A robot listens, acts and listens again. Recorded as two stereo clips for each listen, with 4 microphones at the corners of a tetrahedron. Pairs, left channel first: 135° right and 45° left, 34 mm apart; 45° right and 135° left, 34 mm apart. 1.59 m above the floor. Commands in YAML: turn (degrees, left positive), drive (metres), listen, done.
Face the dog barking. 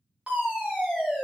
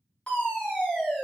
listen: true
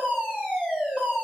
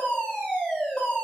listen: true
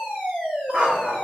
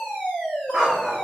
turn: 50
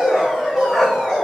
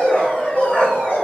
turn: -50
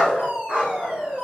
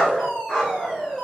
turn: 25
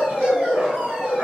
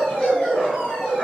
turn: 15
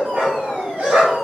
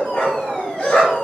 done: "Facing the dog barking, 2 to 4 m away."